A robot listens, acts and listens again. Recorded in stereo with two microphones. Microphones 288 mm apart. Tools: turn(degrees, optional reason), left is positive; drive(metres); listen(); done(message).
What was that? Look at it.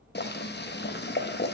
turn(degrees=35, reason="The boiling: about 35° left or 145° left.")
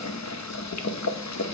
turn(degrees=110, reason="So it is at 110° left.")
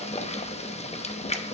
turn(degrees=25, reason="The boiling is now 25° left.")
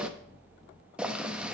done("Found it: boiling, straight ahead, under 1 m away.")